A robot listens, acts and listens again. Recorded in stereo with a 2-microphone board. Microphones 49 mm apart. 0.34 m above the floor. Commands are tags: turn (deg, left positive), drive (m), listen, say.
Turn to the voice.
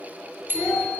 <turn deg="25"/>
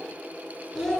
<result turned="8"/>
<turn deg="15"/>
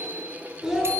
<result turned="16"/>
<say>Found it: a child speaking, straight ahead, 2 to 4 m away.</say>